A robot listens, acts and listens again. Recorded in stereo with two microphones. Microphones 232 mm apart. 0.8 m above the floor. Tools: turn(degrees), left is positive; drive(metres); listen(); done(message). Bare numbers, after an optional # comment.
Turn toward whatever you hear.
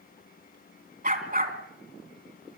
# The dog barking: about 45° right or 135° right.
turn(-45)
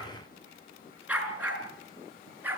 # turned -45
# So it is at 10° right.
turn(-10)
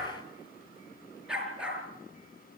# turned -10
done("Facing the dog barking.")